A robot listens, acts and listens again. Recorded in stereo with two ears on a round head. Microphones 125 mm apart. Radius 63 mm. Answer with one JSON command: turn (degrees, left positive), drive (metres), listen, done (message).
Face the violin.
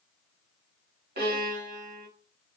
{"turn": -90}
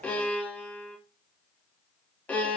{"turn": 10}
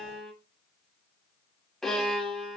{"done": "Found it: a violin, straight ahead."}